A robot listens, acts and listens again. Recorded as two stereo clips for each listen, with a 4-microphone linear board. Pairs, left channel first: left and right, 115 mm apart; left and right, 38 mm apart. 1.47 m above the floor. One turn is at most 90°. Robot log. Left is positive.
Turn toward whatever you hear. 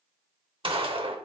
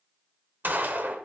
note: The gunshot: about 50° right or 130° right.
cmd yaw -50
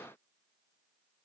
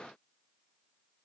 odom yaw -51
cmd idle
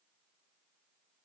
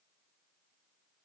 end: I heard a gunshot, but can't make it out now. It was about straight ahead or 75° right.